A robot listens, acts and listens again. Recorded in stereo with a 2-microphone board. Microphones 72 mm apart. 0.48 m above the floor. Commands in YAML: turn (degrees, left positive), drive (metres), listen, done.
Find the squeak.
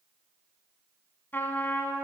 listen: true
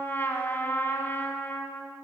listen: true
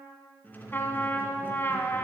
turn: 25
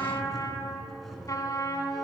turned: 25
done: "Found it: a squeak, straight ahead."